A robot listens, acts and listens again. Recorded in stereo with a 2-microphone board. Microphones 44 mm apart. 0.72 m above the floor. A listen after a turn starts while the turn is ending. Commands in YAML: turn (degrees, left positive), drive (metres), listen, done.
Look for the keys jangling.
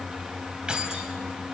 turn: -20
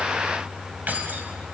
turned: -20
turn: -140
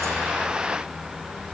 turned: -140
listen: true
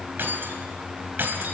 turn: -50
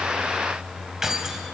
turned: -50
turn: -10
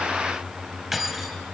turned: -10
done: "Found it: keys jangling, straight ahead, 2 to 4 m away."